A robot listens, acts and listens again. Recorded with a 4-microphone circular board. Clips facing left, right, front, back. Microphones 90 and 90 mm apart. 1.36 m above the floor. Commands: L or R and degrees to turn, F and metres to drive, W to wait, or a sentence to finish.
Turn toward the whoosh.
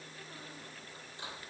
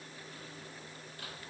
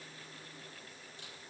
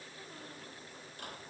W
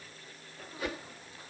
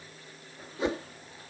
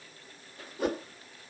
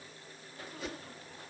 R25
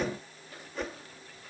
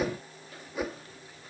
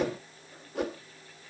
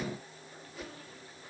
R10
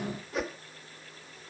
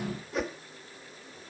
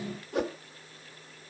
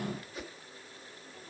Facing the whoosh.